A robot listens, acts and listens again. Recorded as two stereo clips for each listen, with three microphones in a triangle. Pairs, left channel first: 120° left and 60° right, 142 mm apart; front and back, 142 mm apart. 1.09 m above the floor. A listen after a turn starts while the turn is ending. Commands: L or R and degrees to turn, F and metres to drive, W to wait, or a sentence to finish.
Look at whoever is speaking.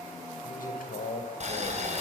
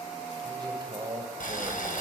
L120
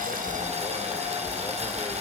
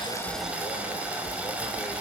W
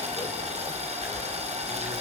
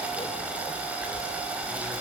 W
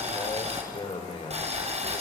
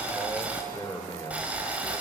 L70
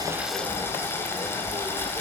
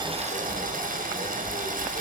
W
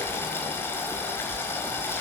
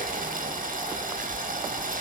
W
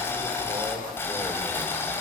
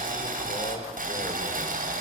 I heard a man speaking from this way, but can't make it out now.